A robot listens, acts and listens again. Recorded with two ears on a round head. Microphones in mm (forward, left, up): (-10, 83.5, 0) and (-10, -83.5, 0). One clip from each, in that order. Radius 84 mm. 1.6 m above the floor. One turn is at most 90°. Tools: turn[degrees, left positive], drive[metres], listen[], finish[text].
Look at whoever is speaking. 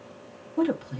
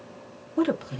Thought: The woman speaking: about 25° right or 155° right.
Action: turn[-25]
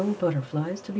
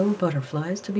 Thought: So it is at 130° right.
Action: turn[-90]
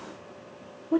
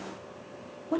Thought: The woman speaking is now 35° right.
Action: turn[-35]
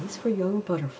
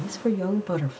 Action: finish[Found it: a woman speaking, straight ahead.]